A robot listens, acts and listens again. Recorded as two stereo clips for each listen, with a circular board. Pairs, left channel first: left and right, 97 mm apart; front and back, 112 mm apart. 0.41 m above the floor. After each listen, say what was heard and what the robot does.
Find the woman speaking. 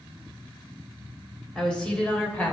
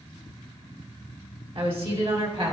The woman speaking: 160° left. Turn 160° left.
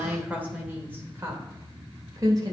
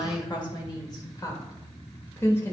The woman speaking is now 65° right. Turn 65° right.
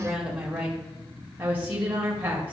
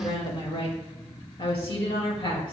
The woman speaking is now 25° right. Turn 25° right.
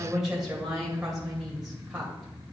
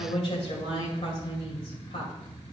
Found it: a woman speaking, straight ahead, 1 to 2 m away.